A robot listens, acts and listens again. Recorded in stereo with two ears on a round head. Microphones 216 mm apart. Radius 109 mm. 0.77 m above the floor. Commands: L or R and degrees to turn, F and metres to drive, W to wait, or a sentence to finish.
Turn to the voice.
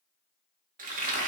W
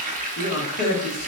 L50
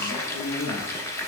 W
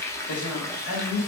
L75
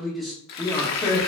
Found it: a man speaking, straight ahead, 1 to 2 m away.